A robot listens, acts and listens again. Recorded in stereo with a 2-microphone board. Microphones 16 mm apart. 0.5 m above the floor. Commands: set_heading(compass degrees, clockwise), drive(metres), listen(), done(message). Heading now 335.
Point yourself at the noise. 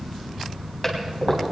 set_heading(315)
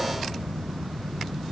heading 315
listen()
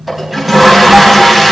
done("Facing the toilet flushing.")